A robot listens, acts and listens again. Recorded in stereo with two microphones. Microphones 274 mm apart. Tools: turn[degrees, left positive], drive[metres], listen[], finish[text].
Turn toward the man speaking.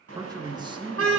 Thought: The man speaking: about 20° right or 160° right.
Action: turn[-20]
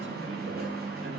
Action: listen[]
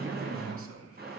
Thought: So it is at 125° right.
Action: turn[-125]
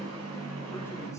Thought: The man speaking is now 10° left.
Action: turn[10]
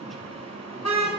Action: listen[]
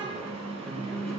Action: listen[]
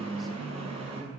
Action: finish[Facing the man speaking.]